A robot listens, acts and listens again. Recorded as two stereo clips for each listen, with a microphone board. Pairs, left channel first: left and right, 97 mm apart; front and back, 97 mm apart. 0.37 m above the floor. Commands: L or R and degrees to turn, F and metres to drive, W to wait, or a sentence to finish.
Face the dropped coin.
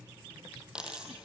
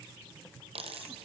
R170
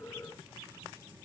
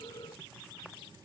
I heard a dropped coin from this way, but can't make it out now.